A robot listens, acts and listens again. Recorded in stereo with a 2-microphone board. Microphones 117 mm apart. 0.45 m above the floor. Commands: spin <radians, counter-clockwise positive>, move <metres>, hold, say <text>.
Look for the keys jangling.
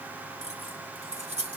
spin -1.13
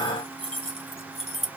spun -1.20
spin -1.05
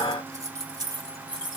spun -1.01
spin -0.79
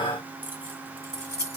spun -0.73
spin -0.44
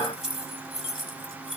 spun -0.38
say Facing the keys jangling, 1 to 2 m away.